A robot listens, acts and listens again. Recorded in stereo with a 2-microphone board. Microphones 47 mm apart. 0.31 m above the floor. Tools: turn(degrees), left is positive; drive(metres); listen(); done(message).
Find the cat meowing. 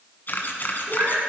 turn(degrees=-50)
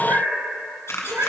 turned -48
turn(degrees=-80)
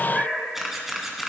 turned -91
done("Found it: a cat meowing, straight ahead.")